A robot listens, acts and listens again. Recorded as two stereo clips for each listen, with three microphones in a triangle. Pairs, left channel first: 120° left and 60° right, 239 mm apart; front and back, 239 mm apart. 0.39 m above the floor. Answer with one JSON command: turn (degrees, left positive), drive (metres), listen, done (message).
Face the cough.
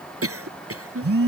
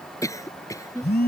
{"turn": -75}
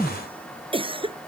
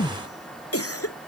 {"turn": 10}
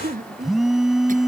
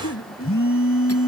{"done": "Facing the cough."}